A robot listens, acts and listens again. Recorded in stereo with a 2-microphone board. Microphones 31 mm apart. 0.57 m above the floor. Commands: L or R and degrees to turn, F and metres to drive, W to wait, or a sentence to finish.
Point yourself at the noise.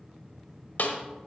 L70
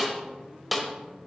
Found it: a snare drum, straight ahead, 1 to 2 m away.